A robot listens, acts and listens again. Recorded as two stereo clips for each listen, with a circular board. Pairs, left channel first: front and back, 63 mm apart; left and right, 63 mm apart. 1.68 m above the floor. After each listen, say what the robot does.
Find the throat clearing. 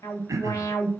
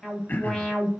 Turn 145° left.
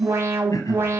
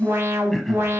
Keep listening.
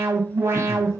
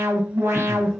Keep listening.
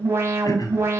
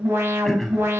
Found it: throat clearing, straight ahead.